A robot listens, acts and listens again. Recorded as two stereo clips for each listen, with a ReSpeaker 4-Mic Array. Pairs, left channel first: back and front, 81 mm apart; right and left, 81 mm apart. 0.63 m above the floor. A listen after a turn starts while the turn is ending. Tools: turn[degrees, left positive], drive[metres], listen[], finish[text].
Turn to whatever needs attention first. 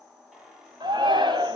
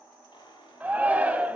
Thought: The shout: 20° left.
Action: turn[20]
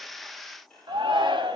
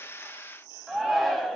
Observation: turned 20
Action: finish[Facing the shout, 2 to 4 m away.]